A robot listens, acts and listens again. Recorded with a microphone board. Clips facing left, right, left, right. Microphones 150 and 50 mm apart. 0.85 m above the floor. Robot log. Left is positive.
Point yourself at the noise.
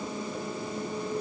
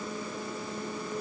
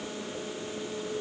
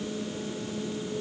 cmd idle
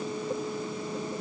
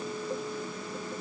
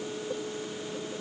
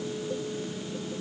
cmd idle
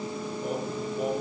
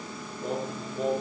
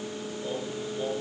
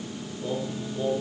cmd yaw +30
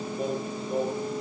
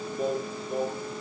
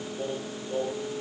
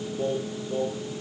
note: So it is at 140° left.
cmd yaw +140
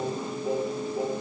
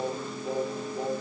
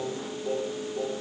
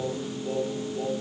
end: Found it: singing, straight ahead, over 4 m away.